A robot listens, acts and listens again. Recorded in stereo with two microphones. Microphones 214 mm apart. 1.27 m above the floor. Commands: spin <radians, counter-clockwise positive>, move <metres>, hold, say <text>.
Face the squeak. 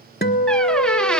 spin 0.52
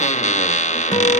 spin 2.53
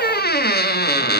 spin 0.87
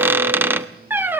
spin -0.17
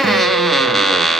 say Found it: a squeak, straight ahead, 1 to 2 m away.